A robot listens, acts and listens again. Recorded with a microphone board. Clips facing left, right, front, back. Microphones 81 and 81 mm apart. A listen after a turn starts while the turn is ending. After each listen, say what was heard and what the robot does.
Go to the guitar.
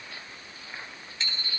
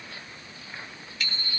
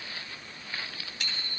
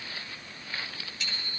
Keep listening.
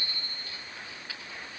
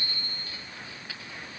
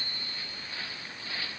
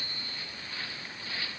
Keep listening.
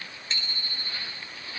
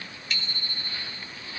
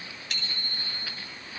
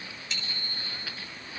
I can't make out a guitar, only a bicycle bell.